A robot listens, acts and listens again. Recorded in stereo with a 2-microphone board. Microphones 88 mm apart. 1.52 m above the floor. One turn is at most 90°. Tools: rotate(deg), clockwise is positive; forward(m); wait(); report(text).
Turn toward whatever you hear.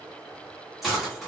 rotate(30)
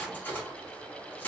rotate(-25)
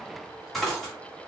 report("Facing the cutlery clinking, 1 to 2 m away.")